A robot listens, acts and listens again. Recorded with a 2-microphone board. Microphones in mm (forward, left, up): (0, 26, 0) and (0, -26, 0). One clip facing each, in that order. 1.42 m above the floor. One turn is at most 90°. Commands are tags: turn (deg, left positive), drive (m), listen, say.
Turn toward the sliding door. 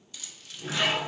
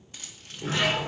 <turn deg="-55"/>
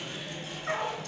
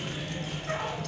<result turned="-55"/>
<turn deg="-10"/>
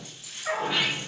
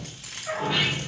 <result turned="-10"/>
<say>Facing the sliding door, 2 to 4 m away.</say>